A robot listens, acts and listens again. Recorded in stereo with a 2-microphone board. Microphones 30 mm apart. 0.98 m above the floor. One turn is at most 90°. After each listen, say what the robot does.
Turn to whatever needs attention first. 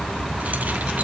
Keep listening.
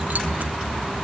Keep listening.
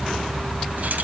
I can't make out anything urgent.